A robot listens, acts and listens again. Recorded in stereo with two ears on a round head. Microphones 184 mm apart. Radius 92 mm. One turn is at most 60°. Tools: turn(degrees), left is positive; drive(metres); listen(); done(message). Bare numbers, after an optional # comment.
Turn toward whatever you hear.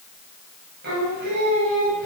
# The singing: about 50° right or 130° right.
turn(-50)
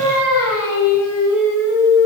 # So it is at 10° right.
turn(-10)
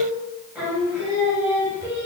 # The singing is now 10° right.
turn(-10)
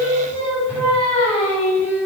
done("Facing the singing, over 4 m away.")